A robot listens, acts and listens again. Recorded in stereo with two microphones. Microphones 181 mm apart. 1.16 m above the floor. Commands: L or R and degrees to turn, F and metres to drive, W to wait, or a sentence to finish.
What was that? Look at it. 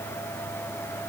W
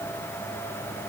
W
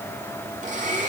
R45
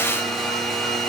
Found it: a blender, straight ahead, over 4 m away.